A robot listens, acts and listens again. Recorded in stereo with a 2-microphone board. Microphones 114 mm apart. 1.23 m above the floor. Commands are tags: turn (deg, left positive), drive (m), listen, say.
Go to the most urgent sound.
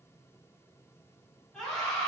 <turn deg="30"/>
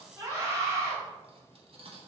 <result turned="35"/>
<turn deg="-30"/>
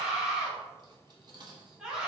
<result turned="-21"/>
<drive m="1.0"/>
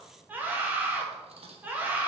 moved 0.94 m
<turn deg="-15"/>
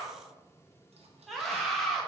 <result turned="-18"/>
<drive m="1.0"/>
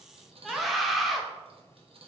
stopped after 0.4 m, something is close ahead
<say>I am next to the scream.</say>